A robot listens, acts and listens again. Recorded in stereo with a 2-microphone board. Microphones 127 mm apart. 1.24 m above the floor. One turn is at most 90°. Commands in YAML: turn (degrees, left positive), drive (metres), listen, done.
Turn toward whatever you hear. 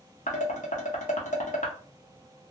turn: 75
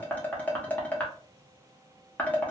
turn: 15
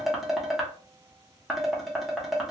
done: "Facing the dishes clattering, under 1 m away."